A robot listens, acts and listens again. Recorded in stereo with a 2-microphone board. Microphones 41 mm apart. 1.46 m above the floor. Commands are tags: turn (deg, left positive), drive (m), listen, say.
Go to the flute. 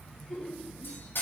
<listen/>
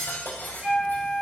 <turn deg="-20"/>
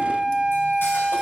<turn deg="-140"/>
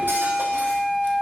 <turn deg="35"/>
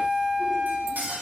<turn deg="10"/>
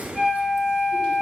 <drive m="1.0"/>
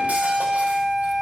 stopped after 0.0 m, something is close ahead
<say>Blocked. The flute is further on, straight ahead.</say>